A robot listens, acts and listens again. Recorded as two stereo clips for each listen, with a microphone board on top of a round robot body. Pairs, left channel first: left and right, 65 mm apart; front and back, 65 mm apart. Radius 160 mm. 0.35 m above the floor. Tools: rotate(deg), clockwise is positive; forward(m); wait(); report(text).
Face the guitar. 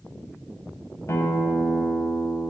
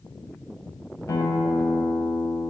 rotate(-40)
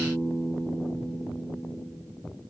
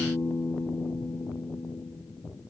rotate(10)
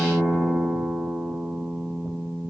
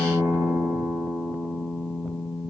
report("Facing the guitar, 1 to 2 m away.")